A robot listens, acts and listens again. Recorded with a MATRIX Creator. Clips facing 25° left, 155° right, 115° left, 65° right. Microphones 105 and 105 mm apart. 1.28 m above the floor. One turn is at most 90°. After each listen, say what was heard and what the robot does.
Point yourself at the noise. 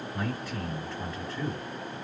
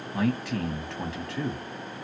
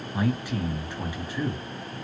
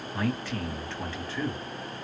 The man speaking: 170° right. Turn 90° right.
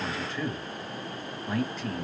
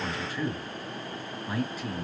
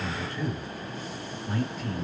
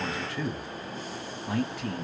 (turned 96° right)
The man speaking is now 75° right. Turn 75° right.
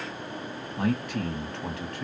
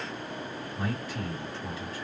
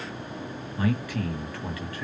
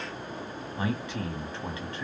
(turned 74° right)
Facing the man speaking, 1 to 2 m away.